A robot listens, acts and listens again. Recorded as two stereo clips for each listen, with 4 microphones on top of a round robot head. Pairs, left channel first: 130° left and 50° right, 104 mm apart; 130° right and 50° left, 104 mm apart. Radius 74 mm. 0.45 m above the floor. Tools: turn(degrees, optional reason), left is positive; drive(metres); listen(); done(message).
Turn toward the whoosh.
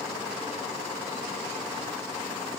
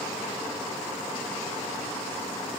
listen()
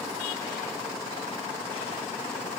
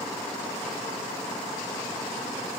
listen()
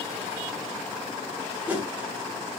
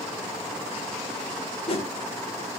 turn(degrees=-125, reason="The whoosh: 125° right.")
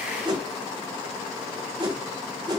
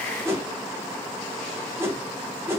turn(degrees=-10, reason="The whoosh is now 10° right.")
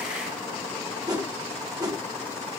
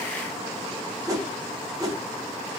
done("Found it: a whoosh, straight ahead.")